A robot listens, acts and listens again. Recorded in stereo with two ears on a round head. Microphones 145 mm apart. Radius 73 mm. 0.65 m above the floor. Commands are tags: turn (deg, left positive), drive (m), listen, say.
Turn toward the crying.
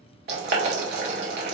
<listen/>
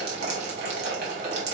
<listen/>
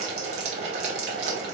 <say>I can't make out crying, only boiling.</say>